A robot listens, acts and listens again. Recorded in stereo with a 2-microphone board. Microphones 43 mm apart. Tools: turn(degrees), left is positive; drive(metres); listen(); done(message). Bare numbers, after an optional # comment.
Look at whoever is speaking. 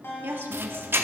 # The woman speaking: about 60° right or 120° right.
turn(-60)
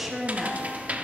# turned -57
done("Found it: a woman speaking, straight ahead, 1 to 2 m away.")